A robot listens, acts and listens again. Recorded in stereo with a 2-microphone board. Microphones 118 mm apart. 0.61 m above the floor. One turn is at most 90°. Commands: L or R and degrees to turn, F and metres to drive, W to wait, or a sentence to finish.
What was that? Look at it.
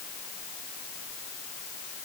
W
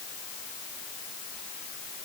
W
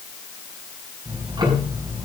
R35
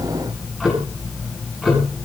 Found it: ticking, straight ahead, over 4 m away.